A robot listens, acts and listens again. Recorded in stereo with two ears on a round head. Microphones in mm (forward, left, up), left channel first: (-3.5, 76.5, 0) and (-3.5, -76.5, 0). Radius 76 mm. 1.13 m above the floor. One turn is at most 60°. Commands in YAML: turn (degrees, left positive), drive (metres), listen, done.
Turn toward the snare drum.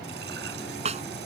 turn: -40
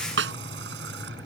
turn: -60
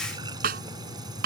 turn: -55
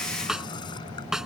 done: "Found it: a snare drum, straight ahead."